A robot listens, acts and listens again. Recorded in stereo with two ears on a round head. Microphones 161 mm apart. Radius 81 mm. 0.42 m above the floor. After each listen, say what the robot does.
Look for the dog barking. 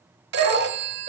Turn 40° right.
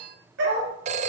Turn 110° right.
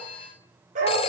Turn 45° right.
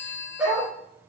Turn 10° right.
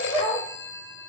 Facing the dog barking.